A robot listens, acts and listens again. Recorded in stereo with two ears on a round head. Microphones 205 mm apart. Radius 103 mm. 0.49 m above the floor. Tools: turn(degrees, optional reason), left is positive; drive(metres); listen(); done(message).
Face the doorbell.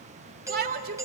turn(degrees=-30)
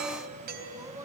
turn(degrees=-135, reason="So it is at 135° right.")
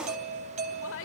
turn(degrees=-35, reason="The doorbell is now 35° right.")
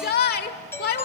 turn(degrees=10, reason="The doorbell is now 10° left.")
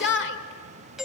done("Facing the doorbell, 2 to 4 m away.")